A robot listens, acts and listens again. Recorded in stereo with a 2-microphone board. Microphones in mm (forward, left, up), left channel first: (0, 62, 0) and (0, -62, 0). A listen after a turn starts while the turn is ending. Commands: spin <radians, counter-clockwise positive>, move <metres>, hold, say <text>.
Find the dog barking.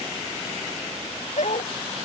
spin 1.13
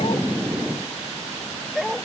say Found it: a dog barking, straight ahead.